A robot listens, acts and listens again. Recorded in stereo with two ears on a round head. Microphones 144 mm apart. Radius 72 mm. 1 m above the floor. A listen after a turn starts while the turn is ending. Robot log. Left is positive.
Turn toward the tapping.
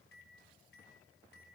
cmd idle
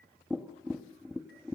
cmd yaw -30
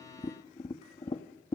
note: So it is at 25° left.
cmd yaw +25
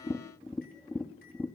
end: Facing the tapping.